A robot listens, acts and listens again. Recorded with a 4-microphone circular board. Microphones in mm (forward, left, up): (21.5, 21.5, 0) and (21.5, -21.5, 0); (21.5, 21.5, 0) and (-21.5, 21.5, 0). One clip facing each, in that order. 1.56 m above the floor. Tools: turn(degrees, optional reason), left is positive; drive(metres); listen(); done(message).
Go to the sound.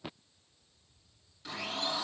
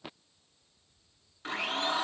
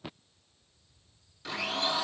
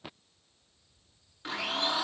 turn(degrees=-125, reason="The blender: 125° right.")
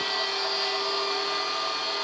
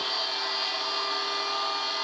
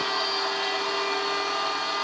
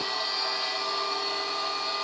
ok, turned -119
drive(metres=1.0)
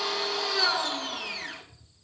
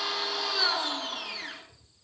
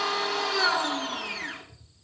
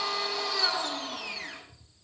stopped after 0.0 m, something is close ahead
done("Something is in my way. I am facing the blender but have not reached it.")